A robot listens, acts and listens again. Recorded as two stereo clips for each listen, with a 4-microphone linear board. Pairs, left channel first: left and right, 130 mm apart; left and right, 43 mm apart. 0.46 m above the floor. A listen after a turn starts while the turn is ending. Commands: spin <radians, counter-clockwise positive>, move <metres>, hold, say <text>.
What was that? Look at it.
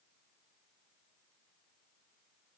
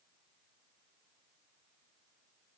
hold
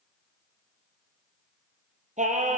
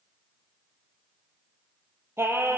spin -1.31
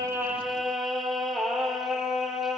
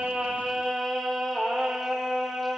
say Found it: singing, straight ahead, 2 to 4 m away.